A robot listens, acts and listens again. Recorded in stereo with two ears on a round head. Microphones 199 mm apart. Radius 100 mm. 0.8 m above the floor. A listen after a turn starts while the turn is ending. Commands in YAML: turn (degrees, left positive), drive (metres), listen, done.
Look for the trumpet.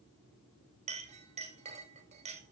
listen: true
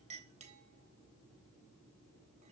listen: true
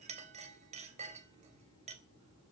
done: "I can't make out a trumpet, only a clink."